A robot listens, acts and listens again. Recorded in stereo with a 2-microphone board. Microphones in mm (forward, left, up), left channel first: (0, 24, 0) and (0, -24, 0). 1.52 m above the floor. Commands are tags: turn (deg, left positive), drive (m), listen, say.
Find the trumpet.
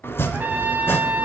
<turn deg="-40"/>
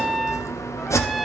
<say>Facing the trumpet, under 1 m away.</say>